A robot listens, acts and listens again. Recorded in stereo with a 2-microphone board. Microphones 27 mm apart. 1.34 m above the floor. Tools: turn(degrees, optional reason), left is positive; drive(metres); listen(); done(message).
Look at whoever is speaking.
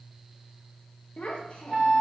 turn(degrees=50, reason="The child speaking: about 50° left or 130° left.")
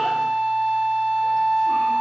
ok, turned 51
listen()
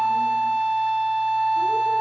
listen()
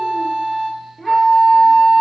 turn(degrees=15, reason="So it is at 15° left.")
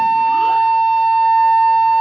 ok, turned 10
listen()
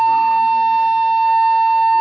listen()
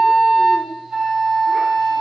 done("Facing where the child speaking came from. I can't hear it now.")